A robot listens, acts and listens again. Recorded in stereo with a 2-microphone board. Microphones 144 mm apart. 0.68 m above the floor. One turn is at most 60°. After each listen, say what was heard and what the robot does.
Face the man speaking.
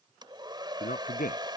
Turn 60° left.
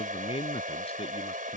So it is at 45° left. Turn 45° left.
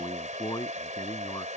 The man speaking is now 25° left. Turn 25° left.
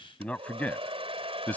The man speaking is now 10° left. Turn 10° left.
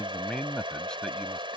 Facing the man speaking.